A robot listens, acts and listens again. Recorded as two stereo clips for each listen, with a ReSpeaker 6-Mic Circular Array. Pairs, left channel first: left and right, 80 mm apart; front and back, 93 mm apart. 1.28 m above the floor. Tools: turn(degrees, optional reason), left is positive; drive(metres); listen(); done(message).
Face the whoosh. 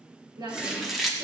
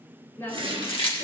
turn(degrees=-170, reason="The whoosh: 170° right.")
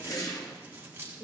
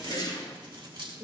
turn(degrees=45, reason="The whoosh is now 45° left.")
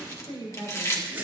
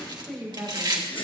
turn(degrees=-25, reason="The whoosh is now 25° right.")
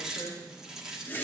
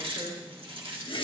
turn(degrees=25, reason="The whoosh is now 25° left.")
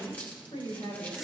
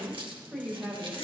done("Found it: a whoosh, straight ahead.")